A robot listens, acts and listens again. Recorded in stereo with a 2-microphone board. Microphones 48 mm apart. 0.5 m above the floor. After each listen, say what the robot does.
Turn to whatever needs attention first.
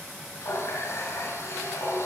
Keep listening.
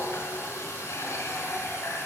Keep listening.
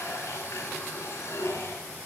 I can't make out anything urgent, only a running tap.